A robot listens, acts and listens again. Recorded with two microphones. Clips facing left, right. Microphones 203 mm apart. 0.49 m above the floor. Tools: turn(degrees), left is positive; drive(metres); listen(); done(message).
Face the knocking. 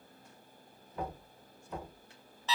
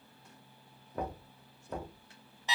turn(degrees=-50)
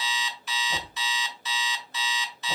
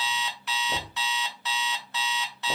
turn(degrees=-70)
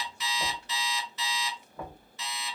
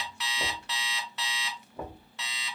turn(degrees=-20)
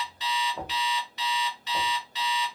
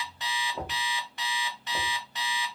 done("Facing the knocking, 1 to 2 m away.")